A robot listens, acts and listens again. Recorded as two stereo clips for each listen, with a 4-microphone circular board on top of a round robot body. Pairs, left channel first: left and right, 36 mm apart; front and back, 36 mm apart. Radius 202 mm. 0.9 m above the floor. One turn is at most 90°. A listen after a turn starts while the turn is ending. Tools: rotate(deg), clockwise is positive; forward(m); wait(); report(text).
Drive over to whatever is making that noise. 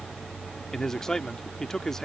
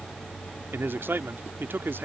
rotate(-90)
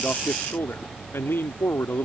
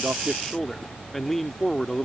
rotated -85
rotate(-85)
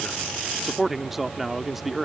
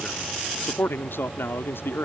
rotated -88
forward(1.0)
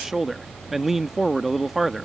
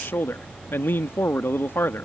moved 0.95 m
forward(1.0)
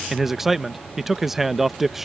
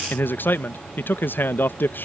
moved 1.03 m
forward(1.0)
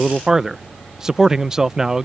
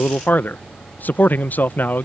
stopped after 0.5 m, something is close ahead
rotate(15)
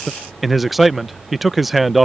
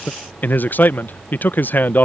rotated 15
report("I am next to the man speaking.")